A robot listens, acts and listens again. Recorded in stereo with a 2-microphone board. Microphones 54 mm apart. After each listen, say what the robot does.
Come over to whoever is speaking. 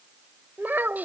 Turn 40° right.
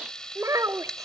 Turn 100° right.
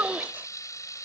Turn 35° right.
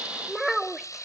Drive 1.0 m forward.
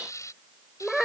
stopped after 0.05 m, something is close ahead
Something is in my way. I am facing the child speaking but have not reached it.